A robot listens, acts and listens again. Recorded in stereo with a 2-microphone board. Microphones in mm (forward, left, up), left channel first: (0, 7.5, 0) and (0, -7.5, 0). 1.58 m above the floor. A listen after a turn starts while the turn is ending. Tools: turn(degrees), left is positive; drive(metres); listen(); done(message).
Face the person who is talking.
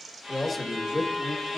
turn(degrees=-20)
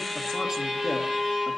listen()
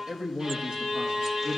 turn(degrees=-110)
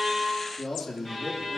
turn(degrees=25)
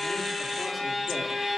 listen()
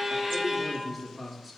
done("Facing the man speaking, 2 to 4 m away.")